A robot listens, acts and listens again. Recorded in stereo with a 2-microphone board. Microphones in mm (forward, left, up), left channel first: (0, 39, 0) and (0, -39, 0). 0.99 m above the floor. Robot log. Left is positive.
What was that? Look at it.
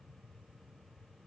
cmd idle
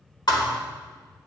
note: The thud: about 60° left or 120° left.
cmd yaw +60
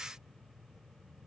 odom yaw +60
cmd idle
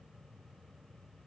end: I heard a thud, but can't make it out now. It was about straight ahead or 60° left.